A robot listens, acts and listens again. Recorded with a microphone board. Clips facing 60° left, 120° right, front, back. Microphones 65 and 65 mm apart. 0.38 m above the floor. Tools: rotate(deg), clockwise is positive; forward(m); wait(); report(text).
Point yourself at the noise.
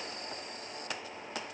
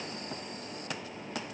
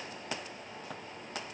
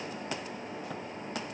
wait()
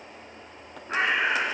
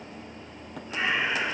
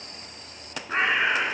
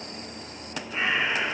rotate(-30)
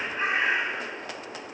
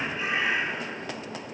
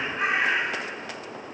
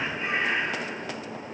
rotate(-10)
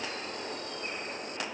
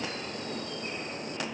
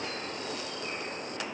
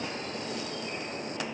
report("Facing the bird, over 4 m away.")